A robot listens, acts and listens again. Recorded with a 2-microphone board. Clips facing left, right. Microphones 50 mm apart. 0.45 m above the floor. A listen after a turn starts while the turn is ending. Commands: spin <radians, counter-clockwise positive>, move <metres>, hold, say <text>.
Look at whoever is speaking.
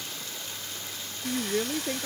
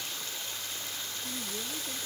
spin 0.87
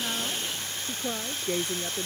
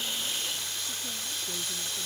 spin 1.48
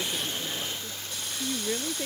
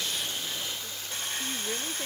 say Found it: a woman speaking, straight ahead.